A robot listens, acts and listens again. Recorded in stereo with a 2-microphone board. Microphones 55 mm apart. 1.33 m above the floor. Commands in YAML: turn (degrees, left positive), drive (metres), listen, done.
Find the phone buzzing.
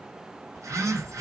turn: -90
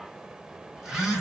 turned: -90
turn: -10
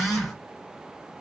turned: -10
done: "Found it: a phone buzzing, straight ahead."